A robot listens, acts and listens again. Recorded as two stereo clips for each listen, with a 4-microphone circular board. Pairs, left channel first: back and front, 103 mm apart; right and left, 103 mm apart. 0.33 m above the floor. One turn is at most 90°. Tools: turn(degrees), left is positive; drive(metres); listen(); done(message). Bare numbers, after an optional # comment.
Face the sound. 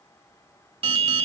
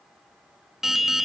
done("Found it: an alarm, straight ahead.")